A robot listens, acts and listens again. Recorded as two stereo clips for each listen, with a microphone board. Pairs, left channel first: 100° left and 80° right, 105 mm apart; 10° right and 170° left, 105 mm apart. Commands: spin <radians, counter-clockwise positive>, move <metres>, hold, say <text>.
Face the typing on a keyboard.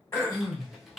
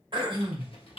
spin 0.17
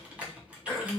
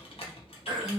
say Facing the typing on a keyboard, 1 to 2 m away.